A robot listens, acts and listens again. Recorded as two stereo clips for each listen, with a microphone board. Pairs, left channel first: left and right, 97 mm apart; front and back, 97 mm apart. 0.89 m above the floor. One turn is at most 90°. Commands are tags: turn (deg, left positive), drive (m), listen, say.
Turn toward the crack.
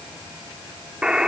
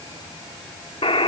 <listen/>
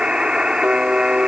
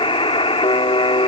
<listen/>
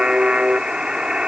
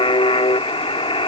<say>I can't make out a crack to turn to.</say>